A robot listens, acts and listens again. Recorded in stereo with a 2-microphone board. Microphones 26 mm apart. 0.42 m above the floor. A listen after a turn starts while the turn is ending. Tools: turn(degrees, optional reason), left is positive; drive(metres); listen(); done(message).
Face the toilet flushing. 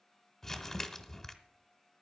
listen()
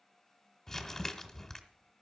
listen()
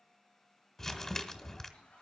turn(degrees=40, reason="The toilet flushing: about 40° left or 140° left.")
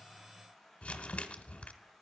done("Facing the toilet flushing, over 4 m away.")